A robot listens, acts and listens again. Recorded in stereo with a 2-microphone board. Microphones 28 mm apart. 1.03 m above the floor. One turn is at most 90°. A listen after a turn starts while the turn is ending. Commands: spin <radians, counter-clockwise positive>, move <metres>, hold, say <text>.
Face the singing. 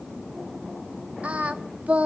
spin -1.05
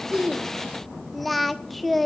say Facing the singing.